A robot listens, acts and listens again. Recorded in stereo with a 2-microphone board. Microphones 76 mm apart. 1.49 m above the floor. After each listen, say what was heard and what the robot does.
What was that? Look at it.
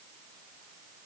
Keep listening.
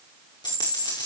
The dropped coin: about 75° left or 105° left. Turn 75° left.
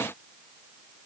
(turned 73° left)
Keep listening.
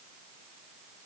I heard a dropped coin, but can't make it out now. It was about straight ahead or 35° left.